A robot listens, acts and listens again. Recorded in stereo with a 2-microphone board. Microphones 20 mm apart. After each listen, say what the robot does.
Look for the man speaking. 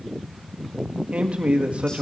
Turn 90° right.
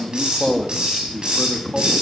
Turn 35° left.
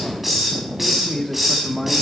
Turn 20° left.
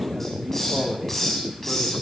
Facing the man speaking.